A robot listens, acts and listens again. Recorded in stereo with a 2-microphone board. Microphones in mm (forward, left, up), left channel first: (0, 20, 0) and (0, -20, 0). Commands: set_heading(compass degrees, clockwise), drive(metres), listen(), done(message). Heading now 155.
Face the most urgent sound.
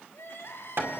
set_heading(95)
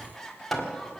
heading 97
set_heading(87)
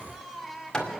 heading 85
done("Facing the crying.")